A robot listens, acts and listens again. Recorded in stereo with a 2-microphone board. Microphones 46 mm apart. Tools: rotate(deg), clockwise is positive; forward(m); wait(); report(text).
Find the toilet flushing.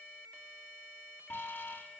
wait()
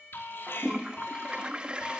rotate(20)
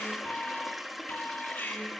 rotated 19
report("Facing the toilet flushing.")